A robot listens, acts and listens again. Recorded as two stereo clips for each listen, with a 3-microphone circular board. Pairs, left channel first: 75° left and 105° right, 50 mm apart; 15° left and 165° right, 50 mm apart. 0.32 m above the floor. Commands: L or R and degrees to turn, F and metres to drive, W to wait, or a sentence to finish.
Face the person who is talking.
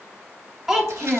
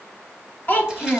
R25
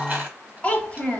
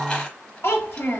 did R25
L20
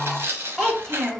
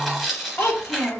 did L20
R10
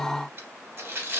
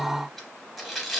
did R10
W
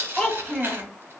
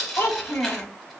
Facing the child speaking.